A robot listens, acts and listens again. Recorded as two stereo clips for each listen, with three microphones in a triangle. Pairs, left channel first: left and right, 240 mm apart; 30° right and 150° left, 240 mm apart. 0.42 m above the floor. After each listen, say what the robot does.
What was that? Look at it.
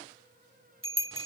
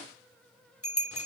Turn 55° right.
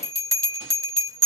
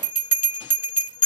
Turn 15° right.
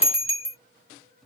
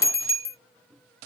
Facing the bell.